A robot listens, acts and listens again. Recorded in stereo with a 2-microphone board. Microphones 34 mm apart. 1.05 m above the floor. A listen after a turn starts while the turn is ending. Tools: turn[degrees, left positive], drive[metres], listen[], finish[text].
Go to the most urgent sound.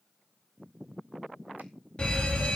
Thought: The fire alarm: about 25° left or 155° left.
Action: turn[25]
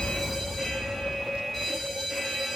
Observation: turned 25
Action: drive[1.0]
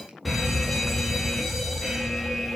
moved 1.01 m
Action: drive[1.0]
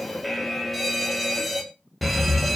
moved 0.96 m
Action: drive[1.0]
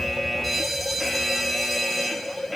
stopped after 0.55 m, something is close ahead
Action: finish[I am next to the fire alarm.]